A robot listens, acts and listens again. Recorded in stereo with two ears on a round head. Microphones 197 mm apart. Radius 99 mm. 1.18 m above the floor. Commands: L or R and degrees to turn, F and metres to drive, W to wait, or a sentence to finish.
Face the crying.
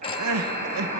R90
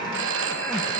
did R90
W
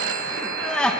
Found it: crying, straight ahead.